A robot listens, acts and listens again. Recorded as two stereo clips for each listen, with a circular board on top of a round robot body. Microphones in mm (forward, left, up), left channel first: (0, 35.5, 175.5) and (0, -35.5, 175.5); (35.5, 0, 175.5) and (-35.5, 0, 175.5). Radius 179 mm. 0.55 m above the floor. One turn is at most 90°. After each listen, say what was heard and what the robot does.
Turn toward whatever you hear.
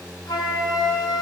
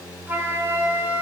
The flute: 120° left. Turn 90° left.
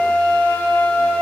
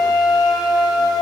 The flute is now 25° left. Turn 25° left.
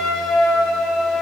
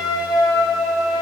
Facing the flute.